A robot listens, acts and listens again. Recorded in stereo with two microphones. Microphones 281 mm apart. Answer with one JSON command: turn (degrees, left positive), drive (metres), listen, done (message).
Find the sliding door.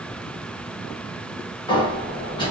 {"turn": 15}
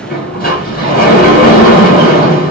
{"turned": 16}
{"turn": 145}
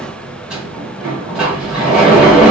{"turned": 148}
{"done": "Found it: a sliding door, straight ahead."}